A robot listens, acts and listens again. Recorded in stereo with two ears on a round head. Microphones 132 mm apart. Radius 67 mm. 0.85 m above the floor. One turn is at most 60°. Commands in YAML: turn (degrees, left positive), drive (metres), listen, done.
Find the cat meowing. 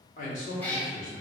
turn: 30
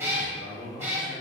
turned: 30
turn: -20
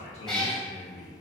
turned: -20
done: "Found it: a cat meowing, straight ahead, 1 to 2 m away."